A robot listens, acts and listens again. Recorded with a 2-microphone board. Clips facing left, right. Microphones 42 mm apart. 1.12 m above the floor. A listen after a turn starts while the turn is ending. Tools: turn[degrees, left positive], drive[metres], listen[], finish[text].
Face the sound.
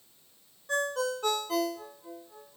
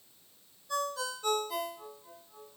Thought: The ringtone: about 60° left or 120° left.
Action: turn[60]
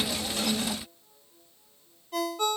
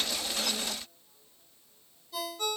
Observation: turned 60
Thought: So it is at 60° left.
Action: turn[60]
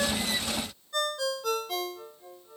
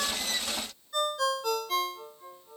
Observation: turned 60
Action: finish[Facing the ringtone.]